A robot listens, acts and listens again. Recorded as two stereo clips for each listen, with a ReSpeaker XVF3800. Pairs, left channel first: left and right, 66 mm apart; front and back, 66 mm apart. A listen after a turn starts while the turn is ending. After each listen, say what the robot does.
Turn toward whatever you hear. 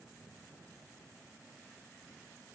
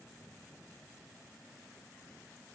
Keep listening.
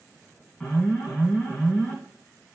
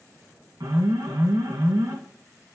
Turn 160° left.
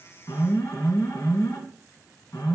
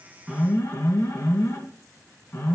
Turn 45° left.
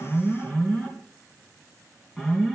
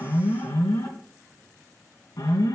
Found it: an alarm, straight ahead, 2 to 4 m away.